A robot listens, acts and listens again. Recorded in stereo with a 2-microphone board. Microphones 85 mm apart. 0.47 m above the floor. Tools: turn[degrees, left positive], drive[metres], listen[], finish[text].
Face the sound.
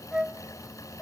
Action: turn[-30]
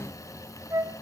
Thought: So it is at 140° right.
Action: turn[-140]
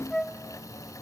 Action: finish[Found it: a flute, straight ahead, under 1 m away.]